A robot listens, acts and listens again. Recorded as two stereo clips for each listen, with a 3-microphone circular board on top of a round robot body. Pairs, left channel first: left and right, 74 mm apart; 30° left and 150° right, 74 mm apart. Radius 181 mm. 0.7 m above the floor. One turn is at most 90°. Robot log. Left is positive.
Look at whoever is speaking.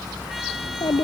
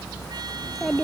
note: The child speaking: 120° left.
cmd yaw +90
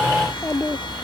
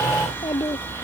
note: The child speaking is now 35° left.
cmd yaw +35
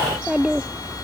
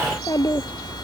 note: The child speaking is now 10° right.
cmd yaw -10
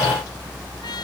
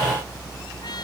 cmd idle
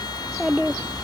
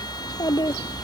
end: Facing the child speaking.